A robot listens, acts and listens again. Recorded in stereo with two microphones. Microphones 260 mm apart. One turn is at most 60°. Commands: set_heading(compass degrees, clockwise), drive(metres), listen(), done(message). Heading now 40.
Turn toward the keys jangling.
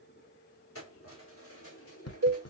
set_heading(340)
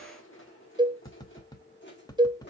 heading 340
set_heading(300)
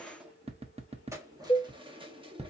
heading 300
set_heading(320)
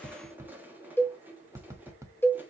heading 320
done("Found it: keys jangling, straight ahead, 1 to 2 m away.")